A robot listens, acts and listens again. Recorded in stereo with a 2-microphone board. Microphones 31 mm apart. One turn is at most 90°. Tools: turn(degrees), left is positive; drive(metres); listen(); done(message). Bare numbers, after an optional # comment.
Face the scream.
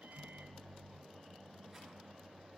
listen()
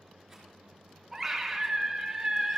turn(-30)
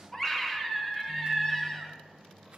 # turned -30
# So it is at 15° left.
turn(15)
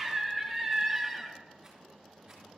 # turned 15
done("Facing the scream.")